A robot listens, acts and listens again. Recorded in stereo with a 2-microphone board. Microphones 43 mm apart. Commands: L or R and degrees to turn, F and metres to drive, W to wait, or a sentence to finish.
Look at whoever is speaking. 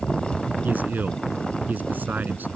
R40
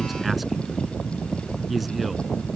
Found it: a man speaking, straight ahead.